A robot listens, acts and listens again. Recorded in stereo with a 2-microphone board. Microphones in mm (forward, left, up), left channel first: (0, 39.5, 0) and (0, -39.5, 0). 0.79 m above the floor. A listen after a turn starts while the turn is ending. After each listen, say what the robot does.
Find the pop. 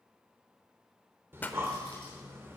Turn 20° left.
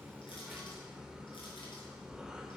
Keep listening.
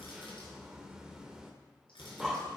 I heard a pop, but can't make it out now. It was about straight ahead or 140° left.